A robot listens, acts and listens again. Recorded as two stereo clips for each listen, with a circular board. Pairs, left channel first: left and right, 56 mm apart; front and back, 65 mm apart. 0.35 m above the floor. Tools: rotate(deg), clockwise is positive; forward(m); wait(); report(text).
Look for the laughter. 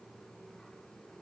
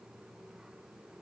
wait()
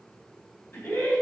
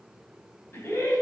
rotate(-40)
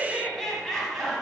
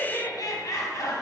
report("Facing the laughter, 2 to 4 m away.")